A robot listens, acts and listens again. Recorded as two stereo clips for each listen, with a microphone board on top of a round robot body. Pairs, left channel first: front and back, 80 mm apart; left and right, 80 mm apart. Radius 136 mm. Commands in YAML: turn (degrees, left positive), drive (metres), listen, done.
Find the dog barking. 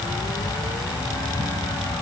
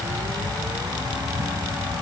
listen: true
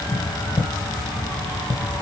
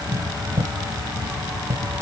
listen: true
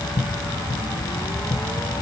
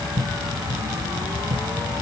done: "I can't make out a dog barking, only tapping."